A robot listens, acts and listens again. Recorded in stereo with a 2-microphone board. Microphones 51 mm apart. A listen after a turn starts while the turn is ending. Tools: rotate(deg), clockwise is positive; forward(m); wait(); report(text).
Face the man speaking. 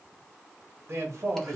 rotate(55)
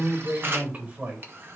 rotate(25)
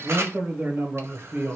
rotate(40)
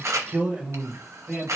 rotate(30)
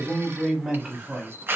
rotate(10)
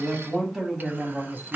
report("Facing the man speaking, 1 to 2 m away.")